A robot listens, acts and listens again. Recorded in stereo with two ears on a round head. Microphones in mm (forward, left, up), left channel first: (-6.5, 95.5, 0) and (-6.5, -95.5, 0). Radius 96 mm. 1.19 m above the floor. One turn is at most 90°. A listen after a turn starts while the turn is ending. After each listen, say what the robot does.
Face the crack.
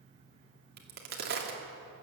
Turn 45° right.
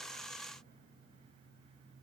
Keep listening.
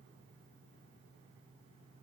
I heard a crack, but can't make it out now. It was about straight ahead or 90° right.